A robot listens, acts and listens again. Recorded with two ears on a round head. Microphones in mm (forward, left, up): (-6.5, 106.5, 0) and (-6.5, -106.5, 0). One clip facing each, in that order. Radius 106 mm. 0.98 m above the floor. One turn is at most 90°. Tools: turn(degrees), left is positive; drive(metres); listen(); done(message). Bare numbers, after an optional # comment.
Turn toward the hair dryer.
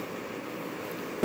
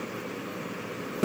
listen()
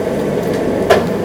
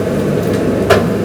listen()
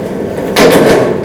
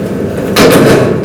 done("I can't make out a hair dryer, only a buzzer.")